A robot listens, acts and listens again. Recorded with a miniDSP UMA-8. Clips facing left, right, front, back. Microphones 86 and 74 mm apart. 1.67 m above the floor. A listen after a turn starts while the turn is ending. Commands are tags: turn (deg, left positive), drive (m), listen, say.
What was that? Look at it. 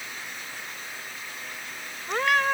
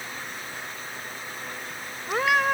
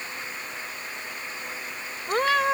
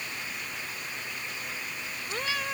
<turn deg="-10"/>
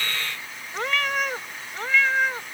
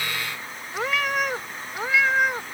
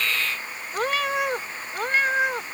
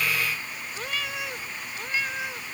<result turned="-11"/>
<turn deg="-15"/>
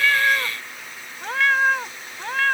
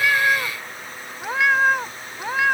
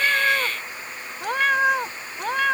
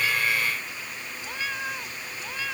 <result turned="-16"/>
<turn deg="-15"/>
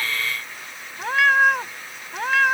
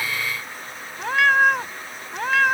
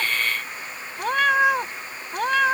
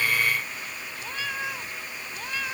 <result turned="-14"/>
<say>Facing the cat meowing.</say>